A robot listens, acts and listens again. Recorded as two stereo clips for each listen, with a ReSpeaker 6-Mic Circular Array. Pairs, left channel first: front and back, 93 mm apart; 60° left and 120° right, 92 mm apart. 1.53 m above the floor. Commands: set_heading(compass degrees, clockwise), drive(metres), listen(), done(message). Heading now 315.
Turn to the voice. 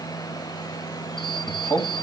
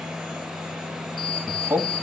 set_heading(20)
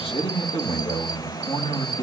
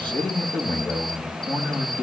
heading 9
set_heading(19)
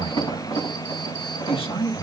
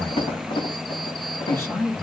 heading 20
done("Found it: a man speaking, straight ahead, 2 to 4 m away.")